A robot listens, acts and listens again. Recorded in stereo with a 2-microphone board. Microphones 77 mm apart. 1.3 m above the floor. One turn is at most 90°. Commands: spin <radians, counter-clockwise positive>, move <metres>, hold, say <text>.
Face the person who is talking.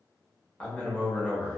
spin 0.26
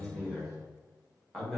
say Found it: a man speaking, straight ahead.